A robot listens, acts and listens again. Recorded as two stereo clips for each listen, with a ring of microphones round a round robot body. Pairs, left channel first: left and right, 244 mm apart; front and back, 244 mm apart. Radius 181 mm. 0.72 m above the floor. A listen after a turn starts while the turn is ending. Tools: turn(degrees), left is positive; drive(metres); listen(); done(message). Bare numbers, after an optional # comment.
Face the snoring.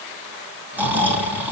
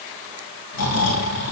done("Found it: snoring, straight ahead.")